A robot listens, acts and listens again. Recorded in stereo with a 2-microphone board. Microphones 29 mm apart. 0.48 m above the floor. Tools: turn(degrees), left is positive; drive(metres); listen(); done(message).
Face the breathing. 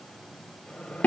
listen()
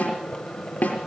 listen()
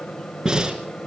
turn(degrees=-20)
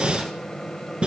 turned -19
turn(degrees=-140)
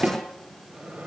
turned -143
listen()
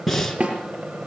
done("Found it: breathing, straight ahead, 2 to 4 m away.")